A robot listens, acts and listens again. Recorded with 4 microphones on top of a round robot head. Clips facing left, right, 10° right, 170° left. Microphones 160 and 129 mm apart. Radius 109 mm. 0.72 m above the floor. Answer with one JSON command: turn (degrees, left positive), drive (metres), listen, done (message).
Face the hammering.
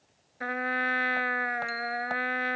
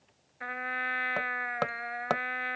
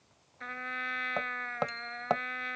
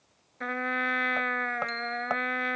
{"turn": -85}
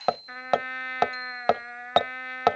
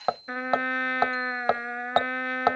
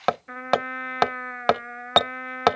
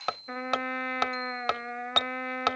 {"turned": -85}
{"turn": 15}
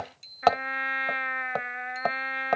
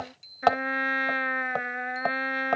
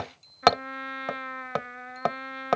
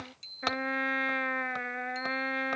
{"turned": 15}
{"done": "Facing the hammering."}